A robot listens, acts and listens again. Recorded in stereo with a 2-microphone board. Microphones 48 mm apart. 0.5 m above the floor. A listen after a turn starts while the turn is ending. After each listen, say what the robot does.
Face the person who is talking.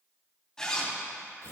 Keep listening.
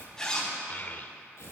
Turn 40° left.
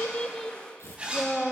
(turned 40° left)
Found it: a child speaking, straight ahead, 1 to 2 m away.